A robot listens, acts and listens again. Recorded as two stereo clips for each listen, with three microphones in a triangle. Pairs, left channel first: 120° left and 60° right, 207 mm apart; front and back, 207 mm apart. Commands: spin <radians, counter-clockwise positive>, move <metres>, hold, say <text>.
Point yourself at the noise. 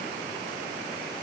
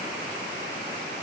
hold
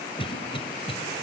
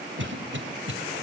spin 3.14
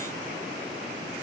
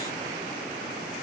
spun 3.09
hold
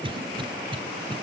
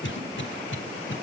say Found it: a cough, straight ahead.